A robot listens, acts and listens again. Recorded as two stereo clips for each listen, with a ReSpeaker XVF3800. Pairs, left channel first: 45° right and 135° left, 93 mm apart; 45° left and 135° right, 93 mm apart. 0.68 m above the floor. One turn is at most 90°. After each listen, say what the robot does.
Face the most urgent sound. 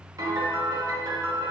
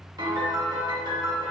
Keep listening.
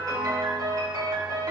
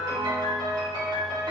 Keep listening.
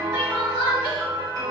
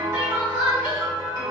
Turn 60° right.
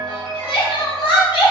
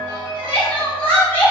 Turn 25° right.
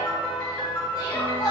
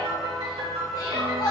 Facing the crying, 1 to 2 m away.